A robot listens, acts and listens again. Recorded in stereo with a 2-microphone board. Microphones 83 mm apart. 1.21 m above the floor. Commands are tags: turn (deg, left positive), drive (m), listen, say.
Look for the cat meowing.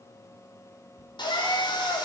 <turn deg="60"/>
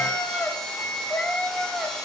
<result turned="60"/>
<say>Found it: a cat meowing, straight ahead, 1 to 2 m away.</say>